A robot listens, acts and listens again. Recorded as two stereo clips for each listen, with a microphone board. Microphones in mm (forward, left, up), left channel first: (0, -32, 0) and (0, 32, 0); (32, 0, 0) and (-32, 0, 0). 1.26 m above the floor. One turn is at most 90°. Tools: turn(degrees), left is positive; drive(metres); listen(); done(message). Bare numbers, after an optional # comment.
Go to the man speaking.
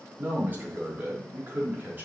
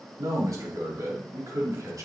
# The man speaking: 150° left.
turn(90)
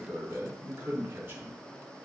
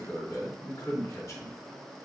# The man speaking is now 35° left.
turn(35)
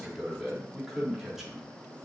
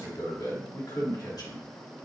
drive(1.0)
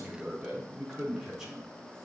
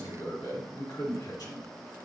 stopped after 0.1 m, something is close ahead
# The man speaking is now 10° left.
turn(10)
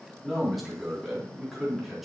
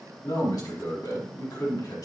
done("Blocked. The man speaking is further on, straight ahead.")